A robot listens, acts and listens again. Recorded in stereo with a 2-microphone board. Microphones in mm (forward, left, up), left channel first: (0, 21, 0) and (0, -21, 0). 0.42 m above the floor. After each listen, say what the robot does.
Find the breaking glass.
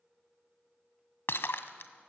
Turn 70° left.
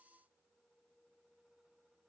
Keep listening.
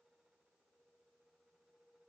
I heard breaking glass, but can't make it out now. It was about straight ahead or 40° left.